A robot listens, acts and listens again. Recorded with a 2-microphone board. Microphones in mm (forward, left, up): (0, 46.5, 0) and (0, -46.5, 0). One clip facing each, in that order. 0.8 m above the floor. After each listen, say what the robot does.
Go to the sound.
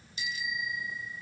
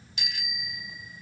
Turn 90° right.
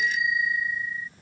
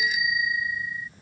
Turn 10° right.
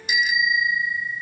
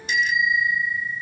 Drive 1.0 m forward.
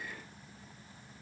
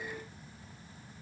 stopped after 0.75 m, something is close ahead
Keep listening.
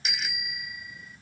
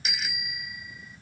Something is in my way. I am facing the bicycle bell but have not reached it.